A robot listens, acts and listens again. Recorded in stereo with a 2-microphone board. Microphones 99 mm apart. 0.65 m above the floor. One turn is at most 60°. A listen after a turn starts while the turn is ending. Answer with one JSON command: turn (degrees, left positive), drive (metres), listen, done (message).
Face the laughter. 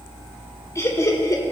{"turn": 35}
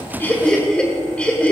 {"turn": 15}
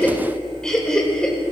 {"turn": 10}
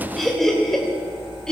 {"done": "Facing the laughter, 2 to 4 m away."}